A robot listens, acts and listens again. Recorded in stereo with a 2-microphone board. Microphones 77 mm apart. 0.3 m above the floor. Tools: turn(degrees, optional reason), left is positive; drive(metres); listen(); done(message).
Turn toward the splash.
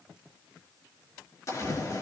turn(degrees=40, reason="The splash: about 40° left or 140° left.")
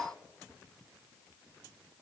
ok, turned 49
listen()
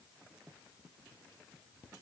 done("I heard a splash, but can't make it out now. It was about 10° right or 90° left.")